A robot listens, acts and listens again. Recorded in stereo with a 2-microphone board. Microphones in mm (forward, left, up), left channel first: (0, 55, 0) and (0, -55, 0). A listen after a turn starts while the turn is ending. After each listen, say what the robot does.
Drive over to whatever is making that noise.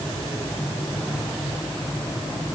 Keep listening.
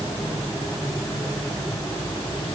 Keep listening.
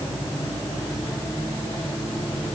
I can't make out anything to turn to.